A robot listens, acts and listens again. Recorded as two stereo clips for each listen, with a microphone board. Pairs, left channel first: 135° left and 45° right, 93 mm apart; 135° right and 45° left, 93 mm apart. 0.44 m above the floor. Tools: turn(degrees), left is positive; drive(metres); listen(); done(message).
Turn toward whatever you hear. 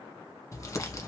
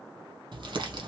turn(degrees=80)
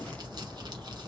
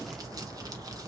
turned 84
done("Facing the crumpling, 1 to 2 m away.")